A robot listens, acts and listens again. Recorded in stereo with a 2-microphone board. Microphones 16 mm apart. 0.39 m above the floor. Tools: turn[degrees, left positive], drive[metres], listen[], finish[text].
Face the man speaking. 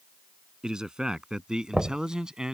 Thought: The man speaking: about 60° right or 120° right.
Action: turn[-60]
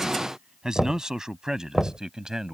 Thought: So it is at 50° right.
Action: turn[-50]
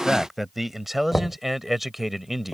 Thought: The man speaking is now 15° right.
Action: turn[-15]
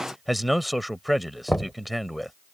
Action: finish[Found it: a man speaking, straight ahead.]